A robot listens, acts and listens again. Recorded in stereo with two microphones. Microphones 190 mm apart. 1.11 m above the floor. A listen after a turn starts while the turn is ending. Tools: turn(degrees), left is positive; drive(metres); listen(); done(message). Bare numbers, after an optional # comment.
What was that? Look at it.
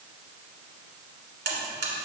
# The buzzer: about 70° right or 110° right.
turn(-70)
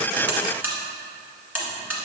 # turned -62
# So it is at 10° right.
turn(-10)
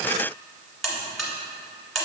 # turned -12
done("Facing the buzzer.")